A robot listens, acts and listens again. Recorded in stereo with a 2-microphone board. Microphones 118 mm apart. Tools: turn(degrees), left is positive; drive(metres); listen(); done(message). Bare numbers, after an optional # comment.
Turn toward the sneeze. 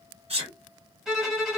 # The sneeze: about 60° right or 120° right.
turn(-60)
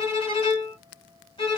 listen()
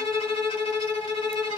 done("I heard a sneeze, but can't make it out now. It was about straight ahead or 60° right.")